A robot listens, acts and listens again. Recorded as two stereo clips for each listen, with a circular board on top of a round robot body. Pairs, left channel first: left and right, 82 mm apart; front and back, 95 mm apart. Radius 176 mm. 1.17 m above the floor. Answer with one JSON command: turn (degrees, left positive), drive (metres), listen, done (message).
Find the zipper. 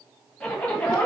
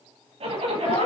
{"turn": 170}
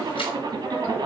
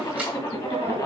{"turn": -45}
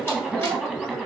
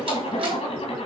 {"done": "Found it: a zipper, straight ahead, 1 to 2 m away."}